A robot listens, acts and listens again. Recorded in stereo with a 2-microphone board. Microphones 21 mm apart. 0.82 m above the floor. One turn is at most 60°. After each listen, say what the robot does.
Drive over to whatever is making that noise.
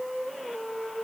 Keep listening.
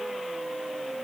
Keep listening.
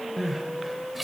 Turn 30° right.
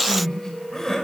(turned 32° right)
Turn 25° left.
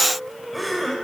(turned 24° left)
Drive 1.0 m forward.
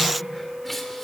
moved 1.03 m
Keep listening.
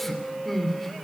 Drive 1.0 m forward.
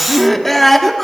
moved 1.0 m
Turn 10° left.
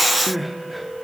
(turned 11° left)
Drive 1.0 m forward.
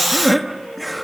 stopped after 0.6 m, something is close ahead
I am next to the crying.